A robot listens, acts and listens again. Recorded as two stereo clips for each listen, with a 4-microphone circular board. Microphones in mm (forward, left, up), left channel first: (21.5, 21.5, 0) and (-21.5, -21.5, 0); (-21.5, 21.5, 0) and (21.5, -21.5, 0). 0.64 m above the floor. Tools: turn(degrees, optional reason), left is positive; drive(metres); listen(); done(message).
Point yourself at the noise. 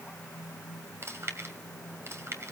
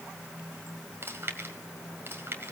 turn(degrees=-95, reason="The chewing: 95° right.")
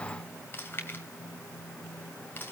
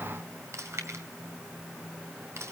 done("Facing the chewing, 2 to 4 m away.")